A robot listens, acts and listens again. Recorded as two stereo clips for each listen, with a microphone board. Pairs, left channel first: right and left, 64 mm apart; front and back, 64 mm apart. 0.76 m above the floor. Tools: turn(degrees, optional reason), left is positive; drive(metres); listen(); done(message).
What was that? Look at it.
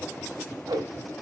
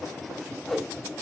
turn(degrees=85, reason="The whoosh: 85° left.")
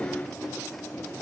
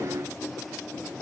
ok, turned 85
listen()
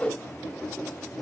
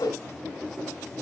turn(degrees=-15, reason="The whoosh is now 15° right.")
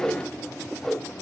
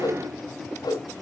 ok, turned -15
done("Facing the whoosh, 1 to 2 m away.")